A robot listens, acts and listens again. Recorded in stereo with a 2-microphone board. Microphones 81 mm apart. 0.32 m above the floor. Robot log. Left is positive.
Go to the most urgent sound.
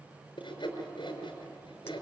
cmd idle
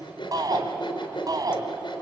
note: The shout: about 50° right or 130° right.
cmd yaw -50
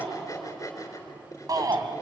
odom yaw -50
note: So it is at 60° right.
cmd yaw -60
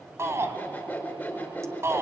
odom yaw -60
note: The shout is now 40° right.
cmd yaw -40
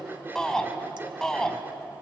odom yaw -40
note: The shout is now 10° left.
cmd yaw +10
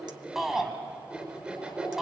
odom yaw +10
cmd fwd 1.0
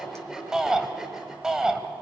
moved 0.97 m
note: The shout is now 10° right.
cmd yaw -10
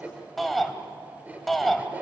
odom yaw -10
cmd fwd 1.0
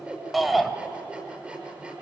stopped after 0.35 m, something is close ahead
end: Arrived at the shout, straight ahead.